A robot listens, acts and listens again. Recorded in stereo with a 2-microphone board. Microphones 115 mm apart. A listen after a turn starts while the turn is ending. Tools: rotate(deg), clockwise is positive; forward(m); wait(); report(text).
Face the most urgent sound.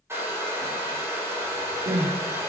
rotate(50)
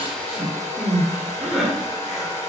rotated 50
rotate(10)
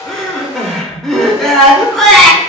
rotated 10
report("Found it: crying, straight ahead, 1 to 2 m away.")